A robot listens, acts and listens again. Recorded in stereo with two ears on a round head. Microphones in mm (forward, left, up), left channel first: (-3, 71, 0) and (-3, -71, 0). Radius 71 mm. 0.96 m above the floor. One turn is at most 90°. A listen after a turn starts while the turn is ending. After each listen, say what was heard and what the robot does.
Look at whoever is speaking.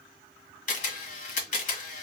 Keep listening.
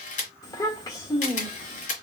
The child speaking: about 25° left or 155° left. Turn 25° left.
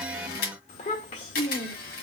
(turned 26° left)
So it is at 130° left. Turn 90° left.
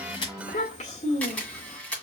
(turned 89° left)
The child speaking is now 40° left. Turn 40° left.
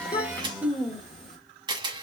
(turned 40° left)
Found it: a child speaking, straight ahead.